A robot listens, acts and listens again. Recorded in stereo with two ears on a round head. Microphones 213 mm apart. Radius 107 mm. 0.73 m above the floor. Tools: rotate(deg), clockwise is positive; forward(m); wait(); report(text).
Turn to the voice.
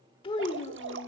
rotate(-20)
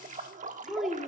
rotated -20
report("Found it: a child speaking, straight ahead.")